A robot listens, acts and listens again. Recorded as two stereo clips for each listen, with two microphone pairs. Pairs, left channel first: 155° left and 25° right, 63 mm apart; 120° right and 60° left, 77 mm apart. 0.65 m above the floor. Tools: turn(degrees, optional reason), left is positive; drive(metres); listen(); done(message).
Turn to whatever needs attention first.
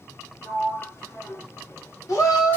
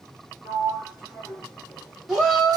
turn(degrees=145, reason="The shout: 145° left.")
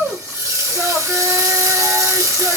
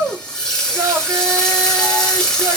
done("Found it: a shout, straight ahead.")